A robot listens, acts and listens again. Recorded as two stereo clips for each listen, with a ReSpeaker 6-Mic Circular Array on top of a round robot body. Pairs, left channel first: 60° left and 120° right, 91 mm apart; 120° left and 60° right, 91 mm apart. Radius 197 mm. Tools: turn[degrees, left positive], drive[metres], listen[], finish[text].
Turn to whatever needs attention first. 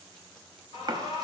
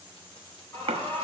Thought: The alarm: 60° left.
Action: turn[60]
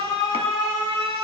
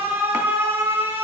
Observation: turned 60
Thought: The alarm is now 10° left.
Action: turn[10]
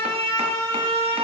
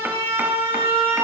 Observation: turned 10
Action: finish[Found it: an alarm, straight ahead, 2 to 4 m away.]